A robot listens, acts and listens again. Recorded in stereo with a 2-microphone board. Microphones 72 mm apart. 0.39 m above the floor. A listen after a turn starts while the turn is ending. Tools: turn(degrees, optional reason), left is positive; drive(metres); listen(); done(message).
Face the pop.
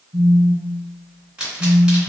turn(degrees=-30)
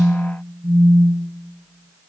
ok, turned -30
listen()
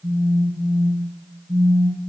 done("I heard a pop, but can't make it out now. It was about 15° left or 135° right.")